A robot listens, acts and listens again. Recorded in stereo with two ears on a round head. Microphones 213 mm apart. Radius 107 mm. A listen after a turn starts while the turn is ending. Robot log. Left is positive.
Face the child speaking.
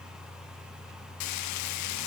cmd idle
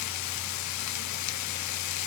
cmd idle
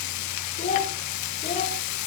note: The child speaking: about 25° left or 155° left.
cmd yaw +25
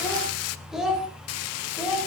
end: Facing the child speaking.